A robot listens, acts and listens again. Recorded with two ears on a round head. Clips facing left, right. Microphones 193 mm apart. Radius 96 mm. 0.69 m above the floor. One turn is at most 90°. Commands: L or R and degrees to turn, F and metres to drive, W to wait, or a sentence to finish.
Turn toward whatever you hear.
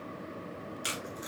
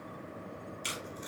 L30
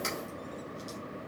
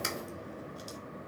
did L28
R20
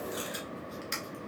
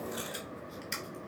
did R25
Facing the tape being pulled, 1 to 2 m away.